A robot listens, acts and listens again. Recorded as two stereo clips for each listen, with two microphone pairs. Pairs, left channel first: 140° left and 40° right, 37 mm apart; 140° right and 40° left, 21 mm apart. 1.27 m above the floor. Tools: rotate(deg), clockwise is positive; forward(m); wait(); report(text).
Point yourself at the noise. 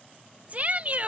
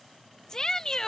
rotate(90)
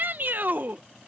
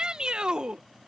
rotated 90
report("Found it: a shout, straight ahead.")